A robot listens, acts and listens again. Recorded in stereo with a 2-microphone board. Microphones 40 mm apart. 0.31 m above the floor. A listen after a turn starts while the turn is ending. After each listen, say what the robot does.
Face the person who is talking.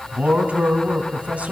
Turn 35° right.
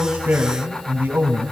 Turn 105° right.
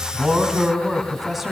Facing the man speaking.